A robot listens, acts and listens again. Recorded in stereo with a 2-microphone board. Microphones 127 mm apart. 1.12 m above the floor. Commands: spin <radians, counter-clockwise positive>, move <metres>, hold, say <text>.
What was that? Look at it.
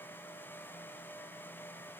hold
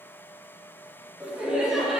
spin 0.52
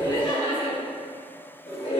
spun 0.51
spin 2.18
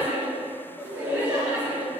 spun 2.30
spin -0.26
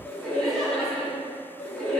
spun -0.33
say Found it: laughter, straight ahead.